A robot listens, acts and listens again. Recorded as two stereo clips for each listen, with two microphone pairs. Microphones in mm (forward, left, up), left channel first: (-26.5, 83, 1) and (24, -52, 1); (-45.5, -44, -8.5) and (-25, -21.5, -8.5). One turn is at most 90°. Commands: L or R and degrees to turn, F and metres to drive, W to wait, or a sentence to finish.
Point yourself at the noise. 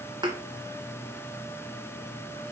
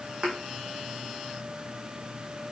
R10
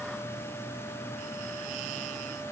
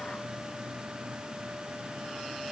I heard a thud from this way, but can't make it out now.